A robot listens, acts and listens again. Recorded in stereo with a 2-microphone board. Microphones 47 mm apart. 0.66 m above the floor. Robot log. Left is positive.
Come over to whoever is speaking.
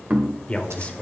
note: The man speaking: about 25° left or 155° left.
cmd yaw +25
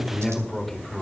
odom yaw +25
cmd fwd 1.0
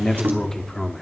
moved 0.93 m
note: The man speaking is now 10° left.
cmd yaw +10
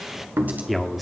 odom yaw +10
cmd fwd 1.0
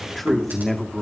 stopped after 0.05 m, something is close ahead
end: Arrived at the man speaking, straight ahead.